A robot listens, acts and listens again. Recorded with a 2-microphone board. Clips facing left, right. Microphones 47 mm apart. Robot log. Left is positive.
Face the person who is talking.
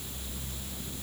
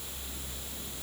cmd idle
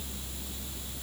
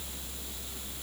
cmd idle
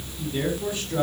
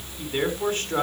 note: The man speaking: about 60° right or 120° right.
cmd yaw -60
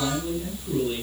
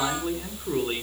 note: So it is at 60° right.
cmd yaw -60
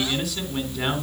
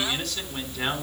end: Found it: a man speaking, straight ahead.